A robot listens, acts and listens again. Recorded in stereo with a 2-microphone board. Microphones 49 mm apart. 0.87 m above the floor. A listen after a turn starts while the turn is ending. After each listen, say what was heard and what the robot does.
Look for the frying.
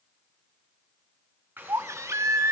The frying: about 40° right or 140° right. Turn 40° right.
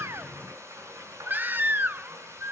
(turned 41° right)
So it is at 100° right. Turn 100° right.
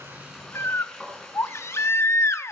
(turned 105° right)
Facing the frying.